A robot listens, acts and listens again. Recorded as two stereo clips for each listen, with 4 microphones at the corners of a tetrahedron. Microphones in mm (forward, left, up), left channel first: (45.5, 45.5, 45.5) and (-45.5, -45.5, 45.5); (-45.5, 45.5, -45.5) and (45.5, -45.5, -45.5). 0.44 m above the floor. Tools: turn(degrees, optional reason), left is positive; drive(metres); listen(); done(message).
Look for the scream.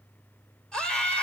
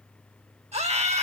turn(degrees=-35, reason="The scream: 35° right.")
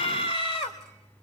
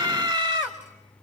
done("Found it: a scream, straight ahead, 2 to 4 m away.")